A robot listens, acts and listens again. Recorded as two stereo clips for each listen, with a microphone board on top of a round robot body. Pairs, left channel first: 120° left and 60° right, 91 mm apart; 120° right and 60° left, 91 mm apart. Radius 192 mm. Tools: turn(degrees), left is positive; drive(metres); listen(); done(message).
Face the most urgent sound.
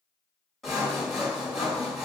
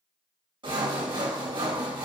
listen()
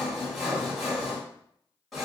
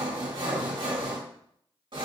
listen()
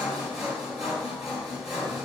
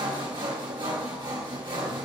done("I can't make out anything urgent, only sawing.")